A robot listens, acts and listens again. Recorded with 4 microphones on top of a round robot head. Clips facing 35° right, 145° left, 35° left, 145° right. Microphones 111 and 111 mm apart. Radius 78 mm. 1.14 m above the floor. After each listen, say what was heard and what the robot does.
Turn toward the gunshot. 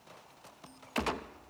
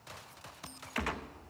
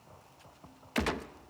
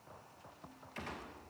The gunshot: 30° left. Turn 30° left.
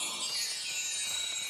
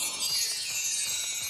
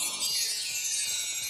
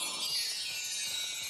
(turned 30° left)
Facing where the gunshot came from. I can't hear it now.